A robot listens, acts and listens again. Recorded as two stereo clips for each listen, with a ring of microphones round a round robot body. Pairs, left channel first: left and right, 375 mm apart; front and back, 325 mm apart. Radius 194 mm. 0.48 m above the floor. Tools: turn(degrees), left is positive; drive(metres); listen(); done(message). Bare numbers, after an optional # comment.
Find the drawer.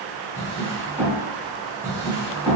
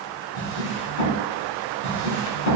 # The drawer: 10° right.
turn(-10)
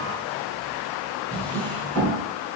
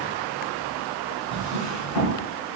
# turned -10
done("Found it: a drawer, straight ahead, 1 to 2 m away.")